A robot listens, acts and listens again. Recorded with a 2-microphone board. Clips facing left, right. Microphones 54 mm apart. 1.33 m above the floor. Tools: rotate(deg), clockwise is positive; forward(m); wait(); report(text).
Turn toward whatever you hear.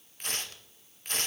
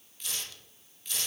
rotate(-45)
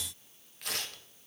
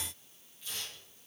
rotate(-90)
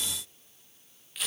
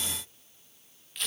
report("Facing the tearing paper, 1 to 2 m away.")